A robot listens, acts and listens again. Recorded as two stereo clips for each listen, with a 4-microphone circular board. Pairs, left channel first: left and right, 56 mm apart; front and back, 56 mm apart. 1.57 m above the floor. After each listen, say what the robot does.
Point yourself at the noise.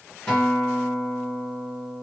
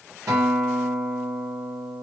Turn 155° left.
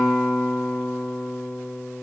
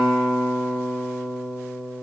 Turn 20° left.
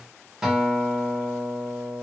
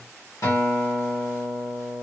Facing the guitar.